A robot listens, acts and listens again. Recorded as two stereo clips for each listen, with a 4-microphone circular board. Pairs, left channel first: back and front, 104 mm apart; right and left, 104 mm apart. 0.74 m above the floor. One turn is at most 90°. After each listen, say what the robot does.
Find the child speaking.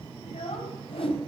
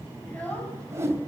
Turn 90° right.
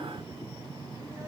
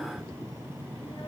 Turn 75° right.
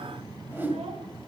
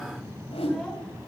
Keep listening.
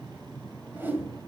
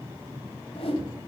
Facing where the child speaking came from. I can't hear it now.